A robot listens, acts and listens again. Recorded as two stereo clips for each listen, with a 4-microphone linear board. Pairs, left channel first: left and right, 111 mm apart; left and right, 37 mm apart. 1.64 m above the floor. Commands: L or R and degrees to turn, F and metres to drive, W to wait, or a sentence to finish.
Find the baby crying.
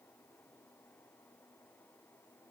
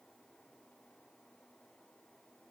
W
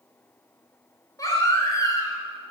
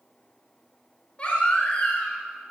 L30
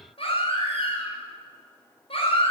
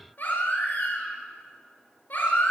L120
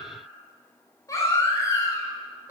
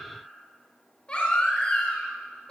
L30
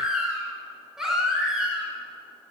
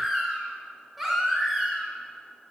Facing the baby crying.